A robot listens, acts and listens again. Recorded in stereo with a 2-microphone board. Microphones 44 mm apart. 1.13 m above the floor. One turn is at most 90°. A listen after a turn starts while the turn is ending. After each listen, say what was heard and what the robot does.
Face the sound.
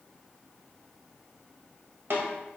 The snare drum: about 55° right or 125° right. Turn 55° right.
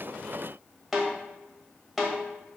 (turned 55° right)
Found it: a snare drum, straight ahead.